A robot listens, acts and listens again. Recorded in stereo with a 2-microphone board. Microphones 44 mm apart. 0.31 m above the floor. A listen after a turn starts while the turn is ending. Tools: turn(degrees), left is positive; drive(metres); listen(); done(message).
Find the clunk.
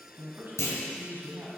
turn(degrees=70)
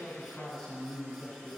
listen()
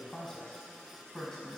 done("I heard a clunk, but can't make it out now. It was about straight ahead or 40° left.")